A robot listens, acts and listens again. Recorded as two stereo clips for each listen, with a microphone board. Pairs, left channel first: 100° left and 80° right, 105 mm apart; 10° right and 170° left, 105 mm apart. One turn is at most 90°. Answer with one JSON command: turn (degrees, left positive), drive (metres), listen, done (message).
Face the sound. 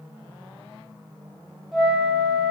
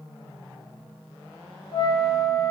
{"turn": 10}
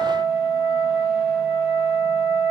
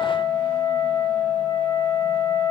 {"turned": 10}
{"done": "Facing the flute."}